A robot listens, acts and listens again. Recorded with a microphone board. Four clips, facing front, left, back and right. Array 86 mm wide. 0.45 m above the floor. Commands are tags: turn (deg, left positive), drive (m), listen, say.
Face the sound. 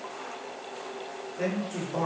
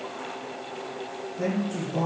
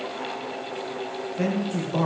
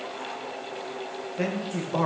<turn deg="-105"/>
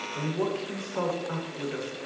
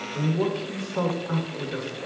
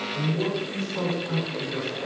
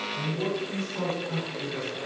<turn deg="75"/>
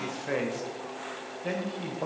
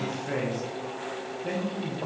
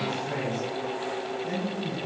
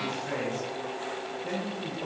<turn deg="15"/>
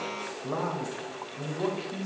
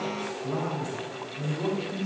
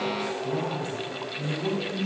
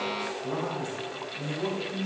<say>Facing the man speaking, 1 to 2 m away.</say>